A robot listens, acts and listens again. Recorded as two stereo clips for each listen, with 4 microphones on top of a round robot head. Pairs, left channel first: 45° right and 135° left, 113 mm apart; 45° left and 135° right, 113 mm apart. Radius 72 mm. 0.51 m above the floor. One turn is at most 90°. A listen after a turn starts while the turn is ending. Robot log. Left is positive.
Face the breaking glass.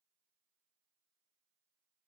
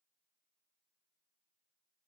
cmd idle
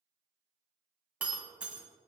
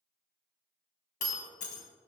note: The breaking glass: 55° left.
cmd yaw +55
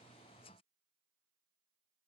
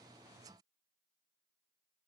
end: Facing where the breaking glass came from. I can't hear it now.